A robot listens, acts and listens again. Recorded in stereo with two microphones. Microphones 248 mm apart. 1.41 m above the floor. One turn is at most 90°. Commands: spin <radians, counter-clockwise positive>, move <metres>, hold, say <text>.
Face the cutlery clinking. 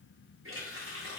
hold
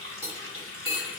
spin -0.44
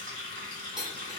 say Facing the cutlery clinking, 1 to 2 m away.